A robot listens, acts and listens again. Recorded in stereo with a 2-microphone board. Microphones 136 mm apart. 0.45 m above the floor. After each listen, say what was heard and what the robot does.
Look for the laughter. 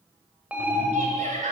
The laughter: about 70° right or 110° right. Turn 70° right.
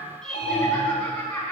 So it is at 10° left. Turn 10° left.
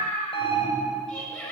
Facing the laughter, over 4 m away.